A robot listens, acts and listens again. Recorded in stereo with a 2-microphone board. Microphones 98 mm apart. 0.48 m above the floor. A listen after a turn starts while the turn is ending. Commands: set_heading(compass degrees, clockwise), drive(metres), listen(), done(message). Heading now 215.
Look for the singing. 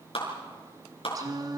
set_heading(260)
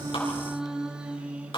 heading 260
set_heading(275)
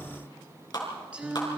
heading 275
set_heading(290)
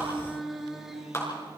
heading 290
done("Found it: singing, straight ahead.")